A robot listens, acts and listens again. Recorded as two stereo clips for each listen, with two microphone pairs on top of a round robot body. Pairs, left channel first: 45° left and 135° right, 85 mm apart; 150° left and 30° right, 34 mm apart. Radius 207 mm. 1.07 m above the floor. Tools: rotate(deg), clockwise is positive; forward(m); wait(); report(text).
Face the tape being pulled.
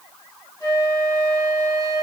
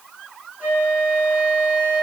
wait()
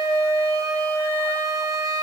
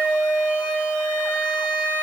wait()
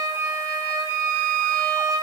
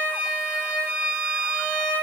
report("I can't make out tape being pulled, only a flute.")